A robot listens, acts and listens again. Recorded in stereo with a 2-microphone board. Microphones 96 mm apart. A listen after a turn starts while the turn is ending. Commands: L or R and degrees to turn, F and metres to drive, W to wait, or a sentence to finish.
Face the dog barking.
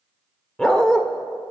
L30
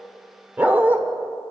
R20
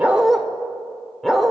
Facing the dog barking, 1 to 2 m away.